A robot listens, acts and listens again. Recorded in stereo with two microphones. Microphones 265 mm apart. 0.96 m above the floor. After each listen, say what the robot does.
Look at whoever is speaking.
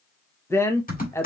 Turn 30° left.
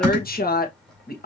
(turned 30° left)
Turn 140° left.
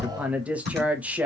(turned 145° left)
Found it: a woman speaking, straight ahead.